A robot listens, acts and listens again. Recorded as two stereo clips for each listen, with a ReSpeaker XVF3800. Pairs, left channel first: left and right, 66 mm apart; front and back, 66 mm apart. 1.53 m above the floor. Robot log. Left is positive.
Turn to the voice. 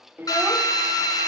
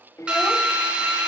note: The child speaking: 35° right.
cmd yaw -35
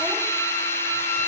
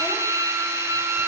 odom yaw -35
cmd idle
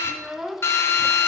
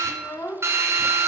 end: Facing the child speaking, under 1 m away.